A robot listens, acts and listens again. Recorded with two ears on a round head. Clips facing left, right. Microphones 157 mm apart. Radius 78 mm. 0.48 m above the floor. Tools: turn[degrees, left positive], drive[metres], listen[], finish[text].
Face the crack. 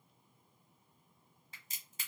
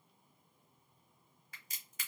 Thought: The crack: about 25° left or 155° left.
Action: turn[25]
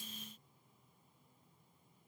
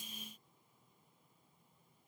Action: listen[]
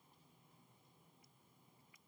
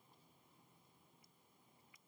Action: finish[I heard a crack, but can't make it out now. It was about straight ahead or 130° left.]